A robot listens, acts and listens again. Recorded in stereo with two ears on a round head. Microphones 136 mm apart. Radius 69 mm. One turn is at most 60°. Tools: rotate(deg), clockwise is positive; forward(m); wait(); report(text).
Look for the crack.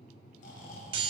wait()
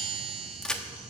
rotate(-30)
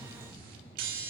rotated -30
wait()
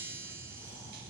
report("I heard a crack, but can't make it out now. It was about 25° right or 145° left.")